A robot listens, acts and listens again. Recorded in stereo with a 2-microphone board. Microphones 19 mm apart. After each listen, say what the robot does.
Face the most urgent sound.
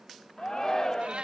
Turn 25° left.
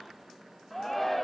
Found it: a shout, straight ahead.